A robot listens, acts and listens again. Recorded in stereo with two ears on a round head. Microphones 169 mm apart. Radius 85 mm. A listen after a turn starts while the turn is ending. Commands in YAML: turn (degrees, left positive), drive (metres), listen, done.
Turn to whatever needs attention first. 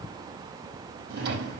listen: true
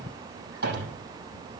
listen: true
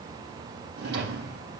done: "I can't make out anything urgent, only a drawer."